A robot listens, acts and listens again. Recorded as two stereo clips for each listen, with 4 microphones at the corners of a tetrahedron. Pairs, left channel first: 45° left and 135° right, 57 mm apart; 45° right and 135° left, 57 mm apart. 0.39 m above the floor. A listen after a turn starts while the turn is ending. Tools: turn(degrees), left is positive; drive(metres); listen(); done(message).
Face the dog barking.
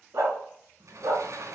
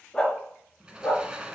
turn(degrees=-115)
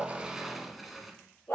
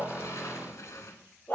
done("Facing the dog barking, 2 to 4 m away.")